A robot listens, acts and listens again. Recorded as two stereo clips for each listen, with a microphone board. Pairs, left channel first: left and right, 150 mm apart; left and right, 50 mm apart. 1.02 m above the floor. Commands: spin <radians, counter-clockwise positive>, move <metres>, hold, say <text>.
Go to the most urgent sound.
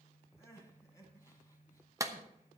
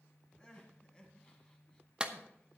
spin 0.35
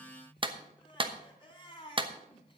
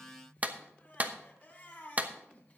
spin 2.53
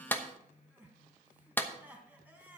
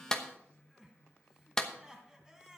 spin -0.17
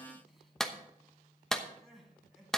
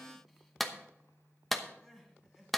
move 1.0
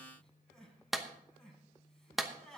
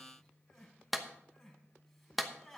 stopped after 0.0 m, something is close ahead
say Blocked. The crying is further on, straight ahead.